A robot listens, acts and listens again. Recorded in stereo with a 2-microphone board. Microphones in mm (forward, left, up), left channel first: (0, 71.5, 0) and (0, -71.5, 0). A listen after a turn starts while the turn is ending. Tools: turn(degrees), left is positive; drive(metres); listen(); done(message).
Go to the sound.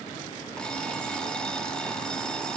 turn(degrees=30)
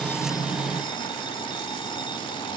turn(degrees=145)
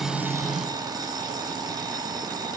turn(degrees=-30)
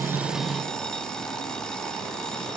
drive(metres=1.0)
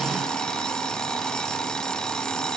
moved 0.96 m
drive(metres=1.0)
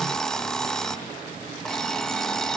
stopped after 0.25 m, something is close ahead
done("Arrived at the alarm clock, straight ahead.")